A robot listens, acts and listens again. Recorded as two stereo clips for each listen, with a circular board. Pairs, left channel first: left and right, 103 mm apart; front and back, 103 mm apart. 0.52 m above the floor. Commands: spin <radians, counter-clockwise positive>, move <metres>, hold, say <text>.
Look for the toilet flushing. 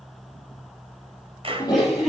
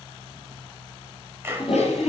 spin 0.70
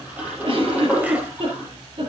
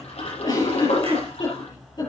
spin -0.26
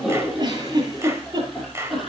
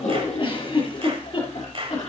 say Facing the toilet flushing.